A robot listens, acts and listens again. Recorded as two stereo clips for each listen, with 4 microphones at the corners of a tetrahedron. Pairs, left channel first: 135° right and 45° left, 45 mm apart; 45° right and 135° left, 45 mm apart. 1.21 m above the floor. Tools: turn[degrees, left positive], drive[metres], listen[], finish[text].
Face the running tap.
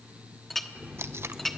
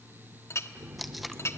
Thought: The running tap: 120° left.
Action: turn[120]
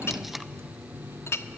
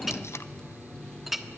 Thought: The running tap is now 30° left.
Action: turn[30]
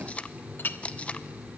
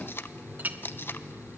Action: finish[Facing the running tap, 2 to 4 m away.]